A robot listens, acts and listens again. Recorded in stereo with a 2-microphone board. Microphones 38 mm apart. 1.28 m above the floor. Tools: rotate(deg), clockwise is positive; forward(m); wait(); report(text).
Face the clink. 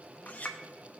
rotate(-45)
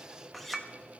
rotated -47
report("Facing the clink.")